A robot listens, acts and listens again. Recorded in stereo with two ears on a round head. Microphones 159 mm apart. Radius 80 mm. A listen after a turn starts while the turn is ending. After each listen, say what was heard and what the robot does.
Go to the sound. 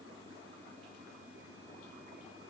Keep listening.
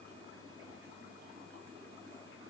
Keep listening.
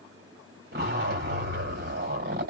The zipper: about 60° right or 120° right. Turn 60° right.
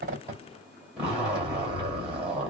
Drive 1.0 m forward.
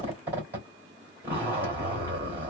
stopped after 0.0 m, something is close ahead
The zipper is now 10° right. Turn 10° right.
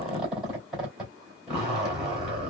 Something is in my way. I am facing the zipper but have not reached it.